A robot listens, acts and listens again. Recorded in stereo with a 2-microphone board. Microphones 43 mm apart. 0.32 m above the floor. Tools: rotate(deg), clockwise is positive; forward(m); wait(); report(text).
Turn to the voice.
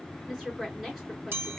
rotate(30)
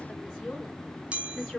rotate(-20)
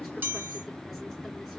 wait()
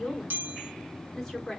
report("Found it: a woman speaking, straight ahead, 2 to 4 m away.")